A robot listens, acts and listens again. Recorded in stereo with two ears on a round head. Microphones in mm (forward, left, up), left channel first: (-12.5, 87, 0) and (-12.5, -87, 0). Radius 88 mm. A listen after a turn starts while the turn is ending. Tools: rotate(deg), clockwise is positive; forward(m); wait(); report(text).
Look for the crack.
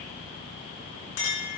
wait()
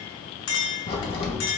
rotate(-30)
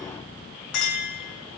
wait()
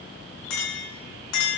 report("I heard a crack, but can't make it out now. It was about straight ahead or 120° left.")